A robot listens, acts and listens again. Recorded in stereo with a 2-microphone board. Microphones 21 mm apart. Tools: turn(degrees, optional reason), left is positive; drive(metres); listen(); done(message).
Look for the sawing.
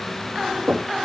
listen()
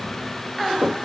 listen()
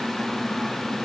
done("I can't make out sawing to turn to.")